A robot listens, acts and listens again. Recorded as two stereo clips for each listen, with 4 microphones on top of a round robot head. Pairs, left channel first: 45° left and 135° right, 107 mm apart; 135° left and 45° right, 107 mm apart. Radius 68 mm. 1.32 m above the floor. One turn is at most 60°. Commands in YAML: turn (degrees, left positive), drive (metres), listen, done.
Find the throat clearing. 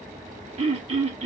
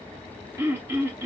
turn: -60
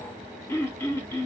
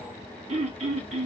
turn: -25
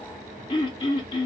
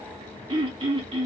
done: "Found it: throat clearing, straight ahead, under 1 m away."